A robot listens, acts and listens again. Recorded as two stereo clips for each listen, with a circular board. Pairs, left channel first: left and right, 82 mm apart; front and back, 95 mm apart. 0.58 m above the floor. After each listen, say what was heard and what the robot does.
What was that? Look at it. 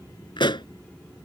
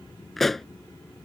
The pop: 85° left. Turn 85° left.
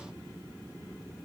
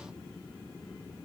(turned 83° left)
I heard a pop from this way, but can't make it out now.